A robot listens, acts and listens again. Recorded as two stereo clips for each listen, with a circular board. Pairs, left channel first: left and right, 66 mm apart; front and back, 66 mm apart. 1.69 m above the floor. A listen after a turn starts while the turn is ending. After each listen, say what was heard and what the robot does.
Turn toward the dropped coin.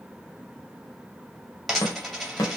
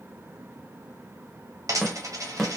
The dropped coin: straight behind. Turn 180° left.
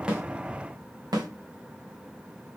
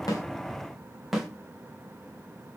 I heard a dropped coin from this way, but can't make it out now.